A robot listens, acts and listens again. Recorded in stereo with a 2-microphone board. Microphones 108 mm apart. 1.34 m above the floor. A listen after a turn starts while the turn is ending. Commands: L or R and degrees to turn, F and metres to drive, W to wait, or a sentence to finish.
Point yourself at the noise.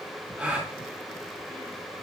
R30
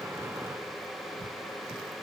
W
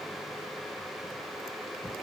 I heard a gasp, but can't make it out now. It was about 20° left or 140° right.